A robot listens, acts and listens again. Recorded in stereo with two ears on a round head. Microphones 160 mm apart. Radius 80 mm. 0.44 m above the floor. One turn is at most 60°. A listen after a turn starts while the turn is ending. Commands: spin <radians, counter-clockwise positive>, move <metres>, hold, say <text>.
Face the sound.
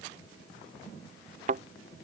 spin -0.79
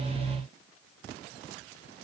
hold
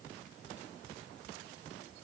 say I heard a thud, but can't make it out now. It was about straight ahead or 90° right.